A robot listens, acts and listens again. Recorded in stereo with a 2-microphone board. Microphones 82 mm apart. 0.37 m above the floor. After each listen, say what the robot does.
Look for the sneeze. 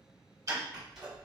Turn 30° right.
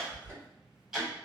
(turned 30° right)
Turn 20° left.
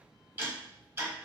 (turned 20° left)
Facing where the sneeze came from. I can't hear it now.